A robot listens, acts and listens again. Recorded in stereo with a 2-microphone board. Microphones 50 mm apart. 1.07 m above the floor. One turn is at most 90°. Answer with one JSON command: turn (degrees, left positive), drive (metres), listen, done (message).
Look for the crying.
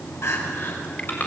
{"turn": 70}
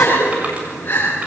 {"turn": 40}
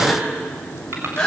{"turn": 15}
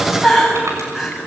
{"done": "Facing the crying."}